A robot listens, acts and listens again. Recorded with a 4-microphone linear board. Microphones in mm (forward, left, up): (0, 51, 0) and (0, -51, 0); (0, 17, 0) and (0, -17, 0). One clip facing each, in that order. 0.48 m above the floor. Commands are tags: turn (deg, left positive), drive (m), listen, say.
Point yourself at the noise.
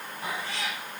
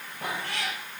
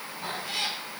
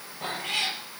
<turn deg="-60"/>
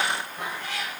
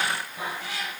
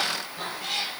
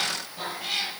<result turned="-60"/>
<say>Found it: a cat meowing, straight ahead, over 4 m away.</say>